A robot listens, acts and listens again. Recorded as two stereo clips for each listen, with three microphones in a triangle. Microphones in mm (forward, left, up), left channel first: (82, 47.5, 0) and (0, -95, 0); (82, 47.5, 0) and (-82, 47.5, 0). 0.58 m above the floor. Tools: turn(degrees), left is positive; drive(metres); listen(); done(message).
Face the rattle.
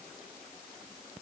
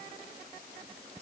listen()
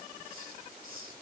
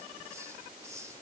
listen()
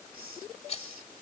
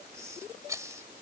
turn(degrees=105)
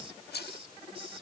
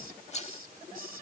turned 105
turn(degrees=50)
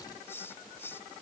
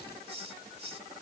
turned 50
listen()
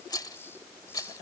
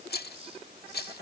turn(degrees=-10)
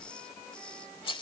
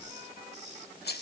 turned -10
done("Facing the rattle.")